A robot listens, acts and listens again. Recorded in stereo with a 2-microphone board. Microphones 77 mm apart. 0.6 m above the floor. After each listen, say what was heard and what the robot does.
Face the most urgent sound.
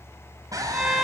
The scream: about 45° right or 135° right. Turn 45° right.
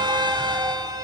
Keep listening.
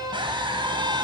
So it is at 90° right. Turn 90° right.
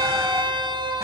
Keep listening.
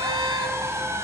The scream is now 35° right. Turn 35° right.
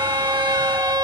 Keep listening.
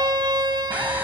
The scream is now 20° right. Turn 20° right.
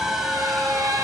Found it: a scream, straight ahead, 2 to 4 m away.